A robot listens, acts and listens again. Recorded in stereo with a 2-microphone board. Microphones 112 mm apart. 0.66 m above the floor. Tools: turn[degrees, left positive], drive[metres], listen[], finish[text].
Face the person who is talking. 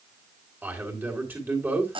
Thought: The man speaking: about 15° right or 165° right.
Action: turn[-15]
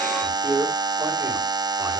Thought: So it is at 150° right.
Action: turn[-150]
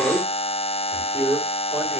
Thought: The man speaking is now 20° right.
Action: turn[-20]
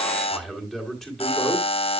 Action: finish[Facing the man speaking.]